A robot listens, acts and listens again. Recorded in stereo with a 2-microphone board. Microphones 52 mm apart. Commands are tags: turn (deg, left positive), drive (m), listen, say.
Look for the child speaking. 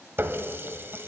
<listen/>
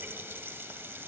<listen/>
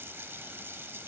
<say>I can't make out a child speaking to turn to.</say>